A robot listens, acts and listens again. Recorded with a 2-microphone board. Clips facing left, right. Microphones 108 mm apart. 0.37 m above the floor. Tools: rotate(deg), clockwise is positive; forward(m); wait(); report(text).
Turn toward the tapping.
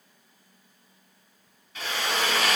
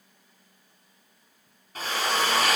wait()
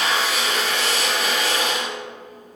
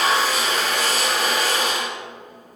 wait()
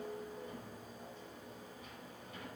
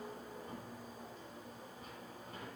report("I can't make out tapping, only a drill.")